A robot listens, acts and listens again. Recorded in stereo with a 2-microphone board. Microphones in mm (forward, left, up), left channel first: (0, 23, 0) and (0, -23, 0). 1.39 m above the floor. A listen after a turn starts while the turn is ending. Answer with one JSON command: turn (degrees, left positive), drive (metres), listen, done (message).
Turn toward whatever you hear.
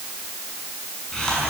{"turn": 30}
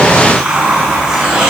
{"turn": -15}
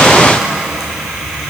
{"turn": -10}
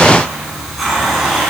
{"done": "Facing the hiss, over 4 m away."}